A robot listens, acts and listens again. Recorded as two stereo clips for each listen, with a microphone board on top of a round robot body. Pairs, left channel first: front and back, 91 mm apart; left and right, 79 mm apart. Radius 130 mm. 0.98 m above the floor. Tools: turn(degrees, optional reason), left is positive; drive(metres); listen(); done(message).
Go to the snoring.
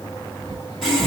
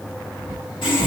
turn(degrees=-160, reason="The snoring: 160° right.")
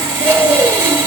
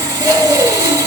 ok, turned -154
drive(metres=1.0)
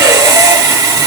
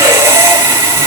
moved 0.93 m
listen()
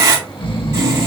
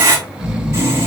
turn(degrees=-10, reason="The snoring is now 10° right.")
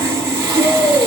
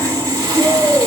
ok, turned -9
drive(metres=1.0)
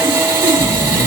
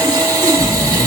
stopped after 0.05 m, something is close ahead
done("I am next to the snoring.")